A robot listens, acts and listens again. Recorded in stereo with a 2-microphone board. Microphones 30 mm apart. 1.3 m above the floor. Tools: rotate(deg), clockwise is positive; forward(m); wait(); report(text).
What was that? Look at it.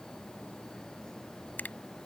rotate(-90)
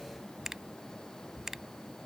rotate(15)
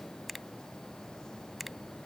report("Found it: a finger snap, straight ahead.")